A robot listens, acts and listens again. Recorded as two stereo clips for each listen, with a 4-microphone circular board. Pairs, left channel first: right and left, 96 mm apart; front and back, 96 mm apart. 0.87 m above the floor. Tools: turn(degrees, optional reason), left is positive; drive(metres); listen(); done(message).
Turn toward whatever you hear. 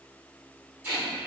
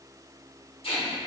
turn(degrees=20, reason="The tape being pulled: 20° left.")
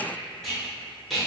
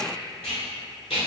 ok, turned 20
done("Facing the tape being pulled.")